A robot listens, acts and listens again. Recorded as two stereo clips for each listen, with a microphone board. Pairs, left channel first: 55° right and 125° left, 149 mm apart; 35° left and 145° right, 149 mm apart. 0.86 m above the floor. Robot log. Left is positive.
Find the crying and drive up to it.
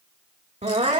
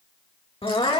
note: The crying: 85° left.
cmd yaw +85
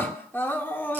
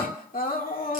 note: The crying is now 20° left.
cmd yaw +20
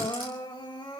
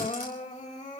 cmd fwd 1.0
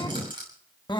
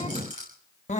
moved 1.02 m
cmd fwd 1.0
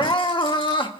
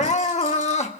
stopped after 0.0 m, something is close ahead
end: Arrived at the crying, straight ahead.